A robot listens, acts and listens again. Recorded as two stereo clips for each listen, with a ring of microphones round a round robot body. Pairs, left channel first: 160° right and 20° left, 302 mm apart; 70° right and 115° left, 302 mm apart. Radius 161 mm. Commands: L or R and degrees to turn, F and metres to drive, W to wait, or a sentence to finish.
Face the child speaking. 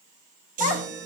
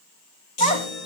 R135
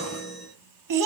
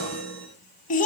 Facing the child speaking.